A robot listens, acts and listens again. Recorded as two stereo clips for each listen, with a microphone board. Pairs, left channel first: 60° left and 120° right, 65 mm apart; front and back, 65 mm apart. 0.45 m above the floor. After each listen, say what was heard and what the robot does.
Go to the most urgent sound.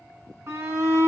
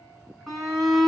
The shout: 95° right. Turn 95° right.
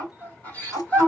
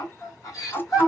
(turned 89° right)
Drive 1.0 m forward.
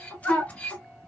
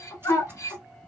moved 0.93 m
The shout is now 10° right. Turn 10° right.
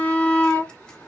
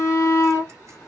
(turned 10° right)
Drive 1.0 m forward.
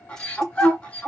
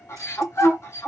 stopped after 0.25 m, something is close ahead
Arrived at the shout, straight ahead.